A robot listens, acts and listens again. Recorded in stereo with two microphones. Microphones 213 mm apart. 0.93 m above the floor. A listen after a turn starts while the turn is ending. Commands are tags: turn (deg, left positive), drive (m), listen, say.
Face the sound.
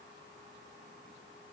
<listen/>
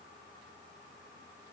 <listen/>
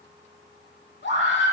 <turn deg="70"/>
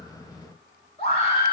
<turn deg="30"/>
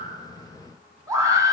<turn deg="-15"/>
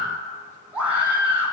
<turn deg="-10"/>
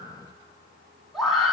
<say>Facing the scream.</say>